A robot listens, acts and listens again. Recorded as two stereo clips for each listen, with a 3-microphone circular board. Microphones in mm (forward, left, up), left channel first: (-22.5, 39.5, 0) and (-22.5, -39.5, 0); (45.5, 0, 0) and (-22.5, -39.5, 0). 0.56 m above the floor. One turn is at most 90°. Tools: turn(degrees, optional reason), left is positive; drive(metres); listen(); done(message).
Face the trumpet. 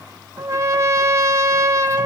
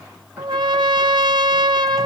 turn(degrees=-90, reason="The trumpet: 140° right.")
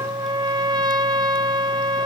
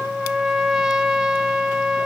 turn(degrees=-65, reason="The trumpet is now 65° right.")
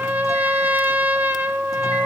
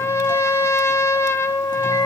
turn(degrees=-25, reason="The trumpet is now 25° right.")
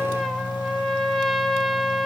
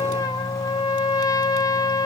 done("Facing the trumpet.")